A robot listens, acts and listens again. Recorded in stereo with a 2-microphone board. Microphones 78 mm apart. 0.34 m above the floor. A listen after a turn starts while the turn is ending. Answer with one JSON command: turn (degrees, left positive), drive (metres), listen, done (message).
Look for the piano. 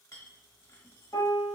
{"turn": 55}
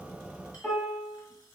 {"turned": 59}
{"turn": 15}
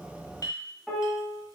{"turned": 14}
{"done": "Facing the piano."}